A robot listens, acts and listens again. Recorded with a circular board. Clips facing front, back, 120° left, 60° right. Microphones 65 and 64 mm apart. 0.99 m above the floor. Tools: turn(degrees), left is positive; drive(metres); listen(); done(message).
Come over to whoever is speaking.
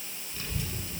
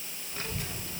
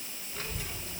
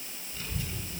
turn(degrees=130)
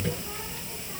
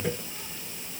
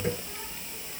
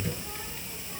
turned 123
turn(degrees=10)
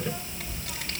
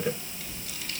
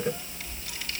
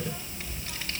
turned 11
drive(metres=1.0)
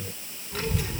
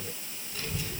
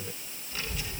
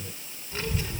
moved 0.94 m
drive(metres=1.0)
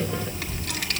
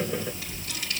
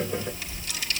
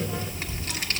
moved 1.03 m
turn(degrees=-15)
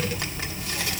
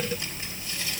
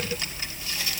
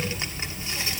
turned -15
drive(metres=1.0)
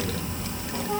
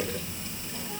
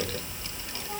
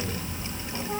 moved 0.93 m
drive(metres=1.0)
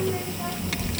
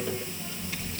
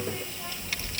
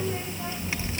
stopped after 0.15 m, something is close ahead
done("Arrived at the child speaking, straight ahead.")